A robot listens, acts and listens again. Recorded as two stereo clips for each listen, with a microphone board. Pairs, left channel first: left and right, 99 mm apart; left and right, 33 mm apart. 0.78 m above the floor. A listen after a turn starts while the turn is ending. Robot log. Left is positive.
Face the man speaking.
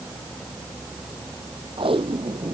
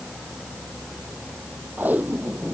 cmd idle
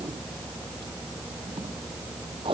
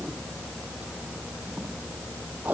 cmd idle
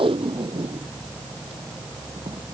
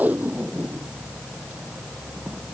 end: I can't make out a man speaking to turn to.